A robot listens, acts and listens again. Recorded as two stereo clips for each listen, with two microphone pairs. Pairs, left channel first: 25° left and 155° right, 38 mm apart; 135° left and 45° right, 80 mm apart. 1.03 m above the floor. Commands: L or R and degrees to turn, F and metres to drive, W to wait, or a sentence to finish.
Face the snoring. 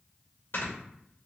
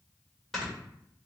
L45
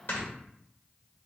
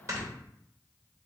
Facing the snoring.